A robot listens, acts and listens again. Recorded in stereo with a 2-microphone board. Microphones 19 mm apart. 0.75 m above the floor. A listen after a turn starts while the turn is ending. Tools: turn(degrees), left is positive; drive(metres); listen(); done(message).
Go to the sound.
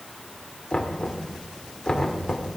turn(degrees=40)
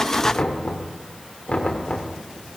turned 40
turn(degrees=105)
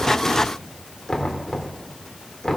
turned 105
turn(degrees=25)
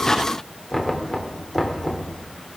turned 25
drive(metres=1.0)
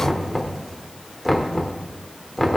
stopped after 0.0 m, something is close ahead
done("Blocked. The knocking is further on, straight ahead.")